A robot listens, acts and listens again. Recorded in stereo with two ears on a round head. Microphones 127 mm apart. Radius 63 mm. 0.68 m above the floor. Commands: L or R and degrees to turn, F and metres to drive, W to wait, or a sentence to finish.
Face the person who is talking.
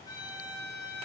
W
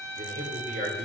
R60
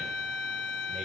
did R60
W
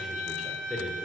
Facing the man speaking.